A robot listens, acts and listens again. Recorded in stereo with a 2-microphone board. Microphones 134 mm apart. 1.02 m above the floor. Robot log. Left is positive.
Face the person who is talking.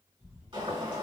cmd idle
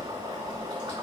cmd idle
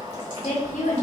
note: The woman speaking: about 65° left or 115° left.
cmd yaw +65
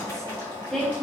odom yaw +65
cmd idle
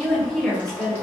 end: Found it: a woman speaking, straight ahead.